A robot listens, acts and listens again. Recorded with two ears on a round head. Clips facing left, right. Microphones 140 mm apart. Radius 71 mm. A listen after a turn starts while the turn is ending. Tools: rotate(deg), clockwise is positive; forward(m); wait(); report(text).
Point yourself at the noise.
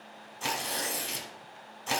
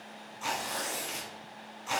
rotate(-60)
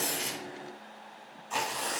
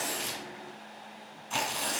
report("Facing the tearing paper.")